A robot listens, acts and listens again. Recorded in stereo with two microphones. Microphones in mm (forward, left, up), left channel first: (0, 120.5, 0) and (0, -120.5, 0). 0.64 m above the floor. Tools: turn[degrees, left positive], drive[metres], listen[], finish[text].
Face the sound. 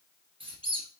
Thought: The squeak: about 20° right or 160° right.
Action: turn[-20]
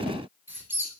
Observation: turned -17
Thought: So it is at 10° right.
Action: turn[-10]
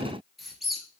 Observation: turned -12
Action: finish[Found it: a squeak, straight ahead, 1 to 2 m away.]